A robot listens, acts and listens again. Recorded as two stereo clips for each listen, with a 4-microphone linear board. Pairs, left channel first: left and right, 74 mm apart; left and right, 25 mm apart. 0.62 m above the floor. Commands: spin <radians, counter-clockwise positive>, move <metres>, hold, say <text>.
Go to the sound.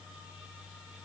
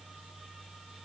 hold
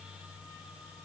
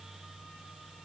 hold
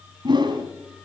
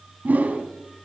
spin -1.57
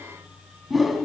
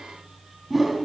move 1.0
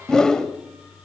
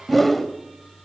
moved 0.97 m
spin 0.17
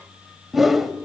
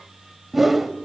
move 1.0
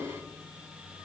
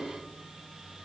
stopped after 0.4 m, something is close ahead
hold
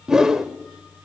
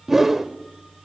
say Arrived at the whoosh, straight ahead.